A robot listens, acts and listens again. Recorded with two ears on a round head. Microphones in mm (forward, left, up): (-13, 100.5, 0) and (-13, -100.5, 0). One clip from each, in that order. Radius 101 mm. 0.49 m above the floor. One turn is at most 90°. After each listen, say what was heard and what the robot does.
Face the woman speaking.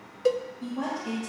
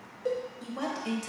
The woman speaking: about 55° right or 125° right. Turn 55° right.
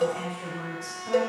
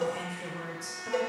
So it is at 20° right. Turn 20° right.
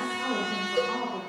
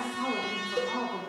The woman speaking is now 25° right. Turn 25° right.
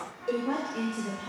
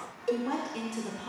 The woman speaking is now 35° right. Turn 35° right.
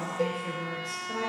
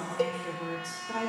The woman speaking is now 40° right. Turn 40° right.
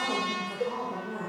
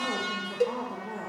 The woman speaking is now 15° right. Turn 15° right.
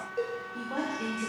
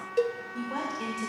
Facing the woman speaking.